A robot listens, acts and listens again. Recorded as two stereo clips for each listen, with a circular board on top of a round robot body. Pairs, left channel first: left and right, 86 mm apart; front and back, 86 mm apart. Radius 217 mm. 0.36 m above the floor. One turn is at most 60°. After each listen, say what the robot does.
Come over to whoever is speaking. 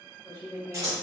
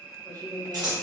Turn 60° left.
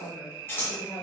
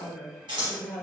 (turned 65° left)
Turn 60° left.
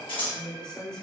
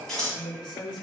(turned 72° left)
Turn 10° left.
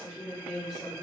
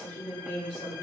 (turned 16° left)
Drive 1.0 m forward.
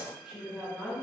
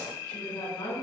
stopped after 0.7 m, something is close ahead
Turn 15° right.
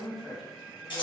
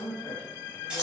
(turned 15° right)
Arrived at the woman speaking, straight ahead.